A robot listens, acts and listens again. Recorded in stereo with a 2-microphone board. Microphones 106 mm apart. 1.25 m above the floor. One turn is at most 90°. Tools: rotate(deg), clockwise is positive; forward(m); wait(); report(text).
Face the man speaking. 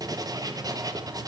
wait()
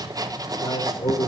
rotate(-65)
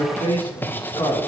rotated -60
rotate(-55)
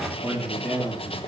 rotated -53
report("Facing the man speaking.")